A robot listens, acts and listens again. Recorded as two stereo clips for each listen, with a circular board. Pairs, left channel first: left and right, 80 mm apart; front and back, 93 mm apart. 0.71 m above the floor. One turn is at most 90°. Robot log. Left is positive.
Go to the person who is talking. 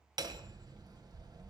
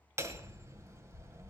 cmd idle
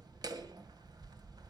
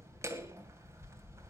cmd idle
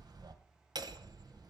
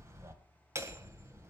end: I can't make out anyone speaking, only hammering.